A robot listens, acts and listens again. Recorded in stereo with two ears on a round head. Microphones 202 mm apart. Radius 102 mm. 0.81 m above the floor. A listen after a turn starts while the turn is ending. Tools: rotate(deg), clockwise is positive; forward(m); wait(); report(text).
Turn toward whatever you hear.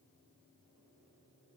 wait()
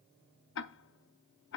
rotate(-60)
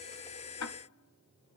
rotate(-60)
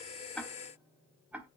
report("Found it: ticking, straight ahead.")